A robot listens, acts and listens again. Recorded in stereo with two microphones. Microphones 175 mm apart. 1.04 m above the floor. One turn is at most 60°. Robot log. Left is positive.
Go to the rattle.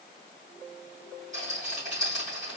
note: The rattle: about 45° right or 135° right.
cmd yaw -45
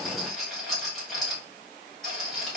cmd fwd 1.0
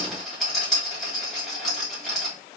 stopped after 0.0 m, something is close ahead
end: Blocked. The rattle is further on, straight ahead.